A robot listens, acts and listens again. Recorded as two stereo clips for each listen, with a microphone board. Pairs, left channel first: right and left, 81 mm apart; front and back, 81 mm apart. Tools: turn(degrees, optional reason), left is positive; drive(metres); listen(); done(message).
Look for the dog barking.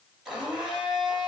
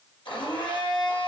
listen()
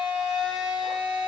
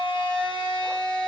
listen()
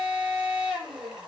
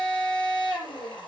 done("I can't make out a dog barking to turn to.")